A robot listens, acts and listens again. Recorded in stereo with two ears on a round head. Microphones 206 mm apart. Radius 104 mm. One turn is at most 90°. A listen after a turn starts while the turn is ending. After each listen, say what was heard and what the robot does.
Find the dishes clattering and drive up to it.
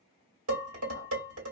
The dishes clattering: about 60° right or 120° right. Turn 60° right.
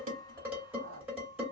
Drive 1.0 m forward.
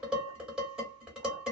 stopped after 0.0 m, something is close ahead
Something is in my way. I am facing the dishes clattering but have not reached it.